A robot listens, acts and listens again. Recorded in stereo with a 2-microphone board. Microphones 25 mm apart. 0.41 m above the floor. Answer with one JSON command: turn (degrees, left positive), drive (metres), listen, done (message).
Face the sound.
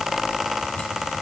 {"listen": true}
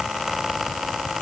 {"listen": true}
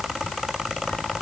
{"done": "I can't make out anything to turn to."}